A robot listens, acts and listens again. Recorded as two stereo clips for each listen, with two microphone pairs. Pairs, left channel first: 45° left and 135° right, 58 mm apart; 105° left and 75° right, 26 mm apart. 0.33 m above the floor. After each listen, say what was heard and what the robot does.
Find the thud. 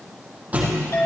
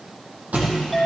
The thud: 75° right. Turn 75° right.
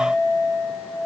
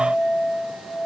I heard a thud from this way, but can't make it out now.